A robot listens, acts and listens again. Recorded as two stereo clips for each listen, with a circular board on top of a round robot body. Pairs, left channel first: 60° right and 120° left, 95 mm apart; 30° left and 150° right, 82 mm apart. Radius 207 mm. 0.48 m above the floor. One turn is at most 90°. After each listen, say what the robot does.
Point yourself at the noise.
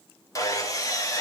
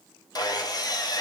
Facing the sawing.